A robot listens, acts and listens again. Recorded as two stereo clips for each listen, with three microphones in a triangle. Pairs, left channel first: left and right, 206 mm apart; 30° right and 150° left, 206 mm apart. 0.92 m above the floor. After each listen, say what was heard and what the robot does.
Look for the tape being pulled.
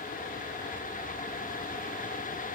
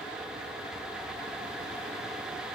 Keep listening.
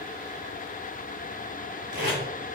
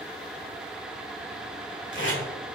The tape being pulled: 55° right. Turn 55° right.
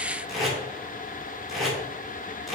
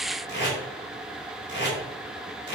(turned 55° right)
Facing the tape being pulled.